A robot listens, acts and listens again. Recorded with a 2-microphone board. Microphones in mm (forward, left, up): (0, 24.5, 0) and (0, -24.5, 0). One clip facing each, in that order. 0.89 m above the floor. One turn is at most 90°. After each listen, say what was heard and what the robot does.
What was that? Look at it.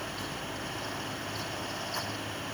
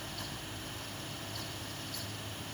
Keep listening.
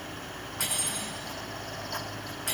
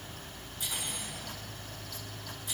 Turn 90° left.
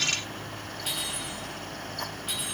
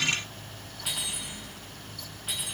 Keep listening.
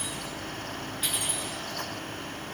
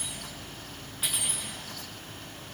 Facing the cutlery clinking, over 4 m away.